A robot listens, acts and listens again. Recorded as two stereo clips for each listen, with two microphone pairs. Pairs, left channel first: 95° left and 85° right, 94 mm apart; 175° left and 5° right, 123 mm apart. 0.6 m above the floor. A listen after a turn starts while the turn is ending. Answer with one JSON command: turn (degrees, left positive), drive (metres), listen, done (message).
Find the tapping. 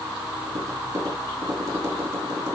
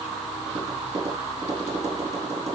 {"turn": -30}
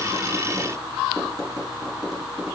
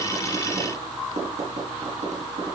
{"done": "Facing the tapping."}